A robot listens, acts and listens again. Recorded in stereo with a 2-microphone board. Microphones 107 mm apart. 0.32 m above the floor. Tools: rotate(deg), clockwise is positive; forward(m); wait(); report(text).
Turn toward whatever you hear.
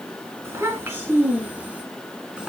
rotate(30)
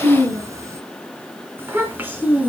rotate(15)
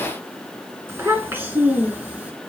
rotate(30)
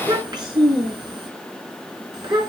rotate(140)
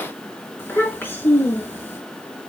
rotate(-20)
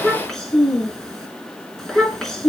report("Found it: a child speaking, straight ahead, 2 to 4 m away.")